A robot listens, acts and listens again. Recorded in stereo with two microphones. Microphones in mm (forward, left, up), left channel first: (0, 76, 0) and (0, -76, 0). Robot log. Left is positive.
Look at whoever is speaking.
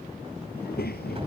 note: The child speaking: about 75° left or 105° left.
cmd yaw +75
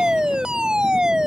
cmd idle
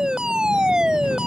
cmd idle
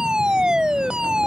end: I heard a child speaking, but can't make it out now. It was about straight ahead or 30° left.